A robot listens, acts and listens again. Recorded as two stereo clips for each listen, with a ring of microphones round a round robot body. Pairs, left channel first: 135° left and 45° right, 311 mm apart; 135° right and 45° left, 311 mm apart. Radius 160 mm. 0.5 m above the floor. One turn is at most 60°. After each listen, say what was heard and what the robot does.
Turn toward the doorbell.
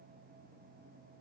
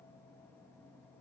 Keep listening.
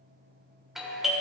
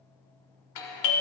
The doorbell: 135° right. Turn 60° right.
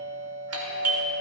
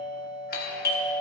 The doorbell is now 80° right. Turn 60° right.
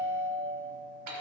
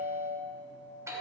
The doorbell is now 35° right. Turn 35° right.
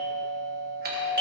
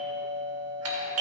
The doorbell is now 10° left. Turn 10° left.
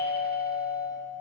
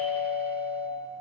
Facing the doorbell.